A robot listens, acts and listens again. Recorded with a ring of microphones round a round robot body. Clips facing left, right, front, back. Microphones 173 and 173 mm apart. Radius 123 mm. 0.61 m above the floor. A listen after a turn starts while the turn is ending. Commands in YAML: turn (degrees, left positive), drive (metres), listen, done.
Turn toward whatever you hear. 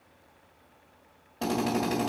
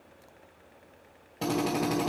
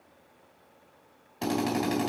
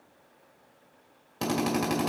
turn: -170
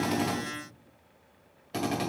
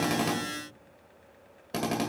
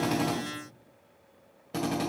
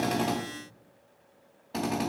turn: -55
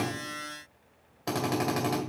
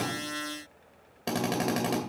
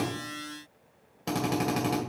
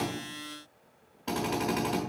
turn: -30
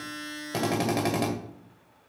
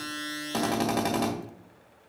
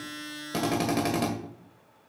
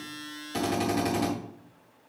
turn: 15
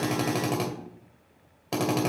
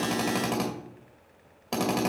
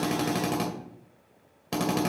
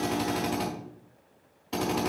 done: "Found it: a drill, straight ahead."